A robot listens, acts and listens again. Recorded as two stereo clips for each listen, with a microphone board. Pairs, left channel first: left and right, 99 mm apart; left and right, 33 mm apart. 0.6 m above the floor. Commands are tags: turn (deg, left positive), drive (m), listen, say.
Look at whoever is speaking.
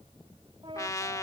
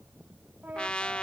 <listen/>
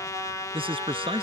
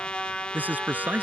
<turn deg="-60"/>
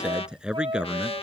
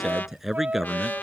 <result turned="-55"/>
<turn deg="-10"/>
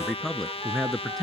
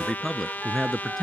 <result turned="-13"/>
<say>Found it: a man speaking, straight ahead.</say>